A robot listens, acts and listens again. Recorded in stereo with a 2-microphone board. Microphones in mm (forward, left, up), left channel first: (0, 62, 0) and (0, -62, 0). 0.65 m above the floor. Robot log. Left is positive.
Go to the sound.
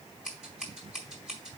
cmd yaw -30
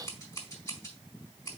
note: So it is at 25° left.
cmd yaw +25
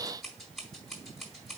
cmd fwd 1.0
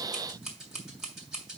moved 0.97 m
cmd fwd 1.0
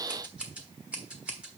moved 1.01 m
note: The scissors is now 10° right.
cmd yaw -10
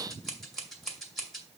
cmd fwd 1.0
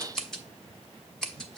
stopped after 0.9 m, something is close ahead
end: Arrived at the scissors, straight ahead.